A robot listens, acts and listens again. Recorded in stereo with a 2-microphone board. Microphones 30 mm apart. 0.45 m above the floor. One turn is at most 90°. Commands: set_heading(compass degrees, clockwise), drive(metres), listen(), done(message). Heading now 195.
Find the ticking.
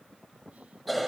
listen()
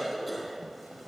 listen()
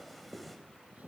done("I can't make out ticking, only a cough.")